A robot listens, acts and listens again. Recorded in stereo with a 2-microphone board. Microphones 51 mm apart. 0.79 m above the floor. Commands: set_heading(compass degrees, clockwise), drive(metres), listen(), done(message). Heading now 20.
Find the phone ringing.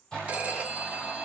set_heading(45)
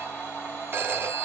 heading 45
set_heading(170)
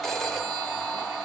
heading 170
done("Found it: a phone ringing, straight ahead.")